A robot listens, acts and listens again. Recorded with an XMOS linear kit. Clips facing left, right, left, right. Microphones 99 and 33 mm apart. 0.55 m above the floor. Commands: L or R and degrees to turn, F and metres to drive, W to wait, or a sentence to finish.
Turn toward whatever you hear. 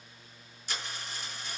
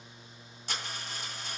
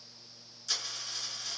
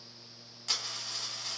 R60
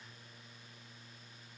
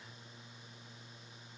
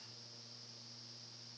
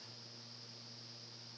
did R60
W
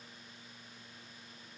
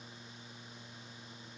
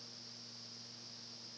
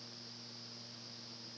I heard a dropped coin, but can't make it out now. It was about straight ahead or 60° right.